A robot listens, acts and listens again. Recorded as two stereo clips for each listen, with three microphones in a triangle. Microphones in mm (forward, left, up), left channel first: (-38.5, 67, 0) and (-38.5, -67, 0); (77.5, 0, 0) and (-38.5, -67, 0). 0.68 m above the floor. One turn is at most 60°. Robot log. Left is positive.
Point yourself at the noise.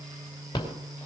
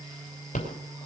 note: The rattle: 30° left.
cmd yaw +30
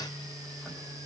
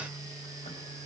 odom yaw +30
cmd idle
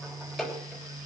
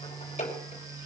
end: Found it: a rattle, straight ahead.